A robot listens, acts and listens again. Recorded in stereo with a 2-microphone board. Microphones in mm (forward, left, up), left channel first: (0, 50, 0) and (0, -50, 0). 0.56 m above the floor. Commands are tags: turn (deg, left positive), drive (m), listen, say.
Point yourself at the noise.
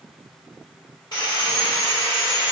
<turn deg="45"/>
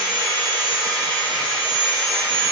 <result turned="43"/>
<turn deg="10"/>
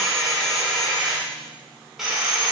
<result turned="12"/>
<say>Found it: sawing, straight ahead, 1 to 2 m away.</say>